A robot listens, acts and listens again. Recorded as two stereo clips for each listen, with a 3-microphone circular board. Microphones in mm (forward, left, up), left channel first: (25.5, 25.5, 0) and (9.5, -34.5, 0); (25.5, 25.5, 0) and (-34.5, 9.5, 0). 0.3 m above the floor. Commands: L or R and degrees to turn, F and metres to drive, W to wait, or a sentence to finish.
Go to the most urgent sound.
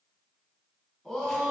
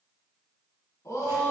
R10
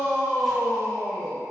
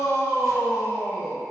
F1.0
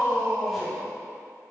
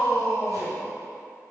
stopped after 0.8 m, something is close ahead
Arrived at the shout, straight ahead.